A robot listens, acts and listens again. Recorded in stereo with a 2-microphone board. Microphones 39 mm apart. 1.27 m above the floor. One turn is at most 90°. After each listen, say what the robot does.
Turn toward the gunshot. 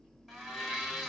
Keep listening.
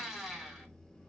Keep listening.
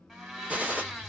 Turn 40° right.
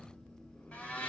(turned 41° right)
Keep listening.
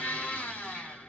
I heard a gunshot, but can't make it out now. It was about straight ahead or 100° right.